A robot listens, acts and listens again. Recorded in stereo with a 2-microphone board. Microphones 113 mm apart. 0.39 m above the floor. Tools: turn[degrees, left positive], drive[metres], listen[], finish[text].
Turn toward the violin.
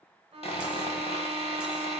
Thought: The violin: about 60° right or 120° right.
Action: turn[-60]
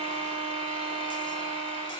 Thought: So it is at 55° right.
Action: turn[-55]
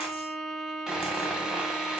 Action: finish[Facing the violin, under 1 m away.]